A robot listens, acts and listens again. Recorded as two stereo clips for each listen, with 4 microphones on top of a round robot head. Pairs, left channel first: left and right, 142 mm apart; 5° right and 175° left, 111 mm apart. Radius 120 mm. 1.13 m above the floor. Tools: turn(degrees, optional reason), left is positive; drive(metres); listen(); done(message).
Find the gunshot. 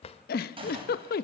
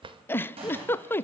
turn(degrees=-140, reason="The gunshot: 140° right.")
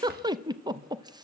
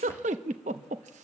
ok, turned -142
done("Facing where the gunshot came from. I can't hear it now.")